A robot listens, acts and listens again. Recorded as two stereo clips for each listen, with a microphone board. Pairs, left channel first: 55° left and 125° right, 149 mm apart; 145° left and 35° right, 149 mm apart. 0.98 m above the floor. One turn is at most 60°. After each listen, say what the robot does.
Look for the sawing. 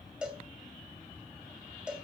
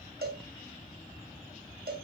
Keep listening.
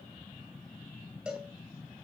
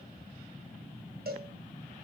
Keep listening.
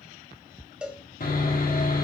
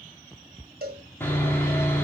Turn 60° left.
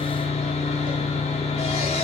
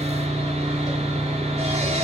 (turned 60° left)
Turn 10° left.
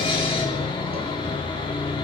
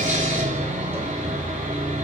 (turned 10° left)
Facing the sawing, 2 to 4 m away.